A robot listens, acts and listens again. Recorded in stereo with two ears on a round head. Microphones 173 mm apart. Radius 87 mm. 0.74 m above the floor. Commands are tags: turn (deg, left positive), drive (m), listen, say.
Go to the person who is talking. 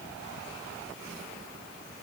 <listen/>
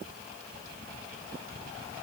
<listen/>
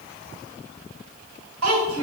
<turn deg="-90"/>
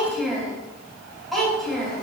<drive m="1.0"/>
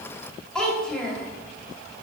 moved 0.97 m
<drive m="1.0"/>
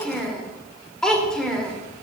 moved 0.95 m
<drive m="1.0"/>
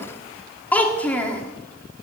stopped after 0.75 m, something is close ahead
<turn deg="10"/>
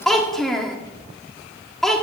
<say>Arrived at the child speaking, straight ahead.</say>